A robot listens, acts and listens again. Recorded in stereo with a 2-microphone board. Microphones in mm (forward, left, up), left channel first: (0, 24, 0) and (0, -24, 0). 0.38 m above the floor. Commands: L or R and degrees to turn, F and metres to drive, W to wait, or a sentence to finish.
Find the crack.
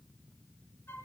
W
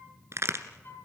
R65
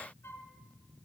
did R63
W
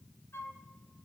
I heard a crack, but can't make it out now. It was about 5° right or 50° right.